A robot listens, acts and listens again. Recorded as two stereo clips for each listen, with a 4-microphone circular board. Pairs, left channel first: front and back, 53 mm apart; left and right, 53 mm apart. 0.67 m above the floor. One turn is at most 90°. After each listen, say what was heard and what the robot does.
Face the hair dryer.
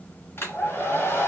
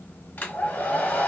The hair dryer: 40° left. Turn 40° left.
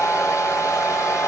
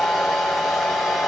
Facing the hair dryer.